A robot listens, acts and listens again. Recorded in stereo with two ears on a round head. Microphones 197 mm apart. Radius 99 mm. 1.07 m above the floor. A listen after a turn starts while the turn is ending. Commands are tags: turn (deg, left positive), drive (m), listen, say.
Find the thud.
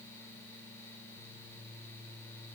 <listen/>
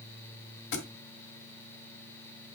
<turn deg="60"/>
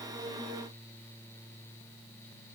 <listen/>
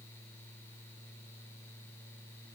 <say>I heard a thud, but can't make it out now. It was about straight ahead or 60° left.</say>